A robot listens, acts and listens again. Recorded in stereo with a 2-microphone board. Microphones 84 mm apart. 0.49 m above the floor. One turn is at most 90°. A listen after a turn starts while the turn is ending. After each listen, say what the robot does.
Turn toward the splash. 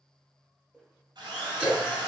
Turn 20° right.
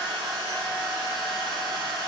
Keep listening.
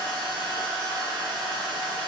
I heard a splash, but can't make it out now. It was about straight ahead or 140° right.